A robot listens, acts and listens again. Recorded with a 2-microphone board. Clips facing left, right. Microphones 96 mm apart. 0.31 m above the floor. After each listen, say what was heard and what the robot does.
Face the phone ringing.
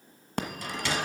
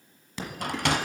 The phone ringing: about 55° left or 125° left. Turn 55° left.
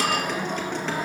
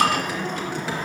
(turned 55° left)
So it is at 10° left. Turn 10° left.
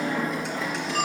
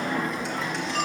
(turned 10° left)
Found it: a phone ringing, straight ahead.